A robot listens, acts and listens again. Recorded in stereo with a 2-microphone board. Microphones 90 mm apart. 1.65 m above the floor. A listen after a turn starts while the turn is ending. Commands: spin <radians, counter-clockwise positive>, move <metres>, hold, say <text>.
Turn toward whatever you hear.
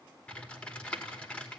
spin 0.26
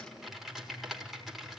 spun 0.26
say Facing the typing on a keyboard, over 4 m away.